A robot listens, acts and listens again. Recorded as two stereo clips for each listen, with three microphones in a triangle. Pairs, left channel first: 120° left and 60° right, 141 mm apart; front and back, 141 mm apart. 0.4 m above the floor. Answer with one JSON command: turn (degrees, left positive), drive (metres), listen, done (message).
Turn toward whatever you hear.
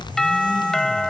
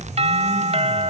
{"turn": -155}
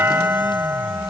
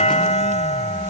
{"turn": 10}
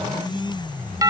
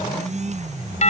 {"done": "Facing the doorbell."}